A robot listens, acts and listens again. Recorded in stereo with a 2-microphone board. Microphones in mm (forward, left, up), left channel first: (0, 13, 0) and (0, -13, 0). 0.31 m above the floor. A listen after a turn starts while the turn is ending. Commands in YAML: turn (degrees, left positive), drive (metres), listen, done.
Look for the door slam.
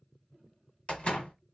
turn: 50
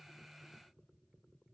listen: true
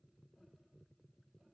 done: "I heard a door slam, but can't make it out now. It was about straight ahead or 80° left."